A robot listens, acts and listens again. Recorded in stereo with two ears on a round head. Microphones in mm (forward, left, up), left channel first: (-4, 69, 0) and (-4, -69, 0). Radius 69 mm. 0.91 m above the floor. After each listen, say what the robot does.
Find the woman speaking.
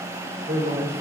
Turn 55° right.
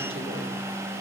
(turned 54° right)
Keep listening.
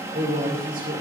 Turn 65° right.
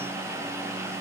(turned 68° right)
Keep listening.
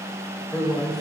Facing the woman speaking.